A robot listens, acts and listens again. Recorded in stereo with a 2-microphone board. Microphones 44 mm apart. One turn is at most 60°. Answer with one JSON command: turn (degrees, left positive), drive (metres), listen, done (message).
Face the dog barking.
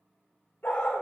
{"turn": 55}
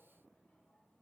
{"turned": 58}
{"listen": true}
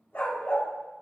{"turn": 55}
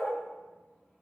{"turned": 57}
{"turn": 30}
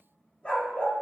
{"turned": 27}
{"turn": 35}
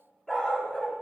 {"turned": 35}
{"turn": 15}
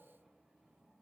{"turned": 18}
{"listen": true}
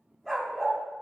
{"done": "Facing the dog barking."}